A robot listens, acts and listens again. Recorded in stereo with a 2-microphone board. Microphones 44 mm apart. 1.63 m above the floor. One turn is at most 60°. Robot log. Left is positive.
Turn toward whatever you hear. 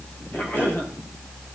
note: The cough: about 45° left or 135° left.
cmd yaw +45
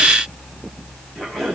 end: Found it: a cough, straight ahead.